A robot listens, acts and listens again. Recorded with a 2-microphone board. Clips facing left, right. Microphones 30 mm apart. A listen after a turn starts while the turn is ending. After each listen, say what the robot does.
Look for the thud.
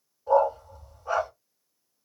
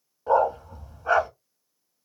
Keep listening.
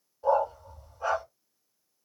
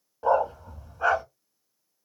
Keep listening.
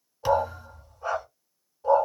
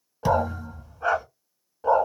Turn 30° left.
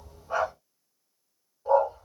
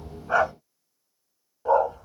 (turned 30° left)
Keep listening.
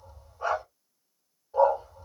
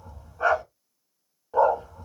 I heard a thud, but can't make it out now. It was about 25° right or 145° left.